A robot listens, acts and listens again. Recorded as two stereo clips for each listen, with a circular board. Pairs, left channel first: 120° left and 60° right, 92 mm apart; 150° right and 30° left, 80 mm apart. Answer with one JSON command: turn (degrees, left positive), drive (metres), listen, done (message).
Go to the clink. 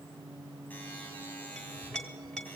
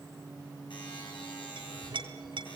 {"turn": 40}
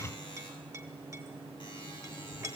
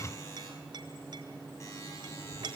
{"drive": 1.0}
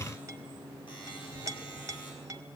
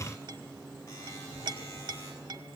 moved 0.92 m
{"drive": 1.0}
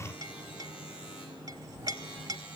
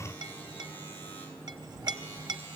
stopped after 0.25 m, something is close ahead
{"turn": -10}
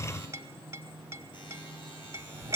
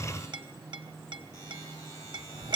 {"done": "I am next to the clink."}